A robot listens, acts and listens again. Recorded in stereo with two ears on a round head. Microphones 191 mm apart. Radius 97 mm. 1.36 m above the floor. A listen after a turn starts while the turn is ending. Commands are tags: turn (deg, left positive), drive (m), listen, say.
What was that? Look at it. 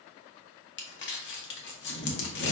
<turn deg="60"/>
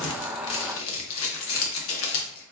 <turn deg="65"/>
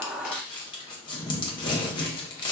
<turn deg="20"/>
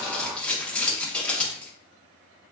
<say>Found it: crumpling, straight ahead, under 1 m away.</say>